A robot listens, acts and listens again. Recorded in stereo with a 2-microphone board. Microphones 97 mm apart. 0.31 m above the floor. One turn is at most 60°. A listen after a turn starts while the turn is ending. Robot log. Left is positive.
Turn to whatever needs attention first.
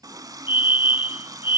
note: The fire alarm: about 50° left or 130° left.
cmd yaw +50
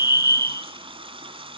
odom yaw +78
note: So it is at 35° left.
cmd yaw +35
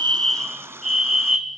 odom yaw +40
end: Found it: a fire alarm, straight ahead.